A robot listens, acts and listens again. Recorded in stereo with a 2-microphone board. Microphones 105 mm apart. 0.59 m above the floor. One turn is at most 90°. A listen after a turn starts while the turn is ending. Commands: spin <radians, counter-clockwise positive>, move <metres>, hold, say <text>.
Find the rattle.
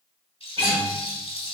spin 1.13
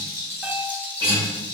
spin 0.35
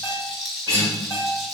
say Facing the rattle, under 1 m away.